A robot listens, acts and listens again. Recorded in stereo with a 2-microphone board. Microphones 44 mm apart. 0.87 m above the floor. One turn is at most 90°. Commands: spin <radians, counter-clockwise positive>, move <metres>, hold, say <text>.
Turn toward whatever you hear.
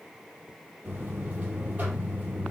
spin -0.61
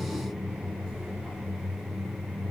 say Facing the buzzer, over 4 m away.